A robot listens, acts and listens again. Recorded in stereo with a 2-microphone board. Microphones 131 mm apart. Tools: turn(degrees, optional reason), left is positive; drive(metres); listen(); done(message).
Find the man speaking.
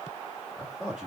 turn(degrees=30)
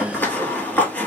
listen()
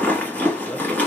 listen()
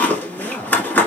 turn(degrees=155, reason="So it is at 155° left.")
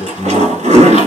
turn(degrees=45, reason="The man speaking is now 45° left.")
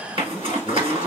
listen()
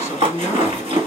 turn(degrees=20, reason="The man speaking is now 20° left.")
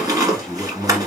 done("Found it: a man speaking, straight ahead.")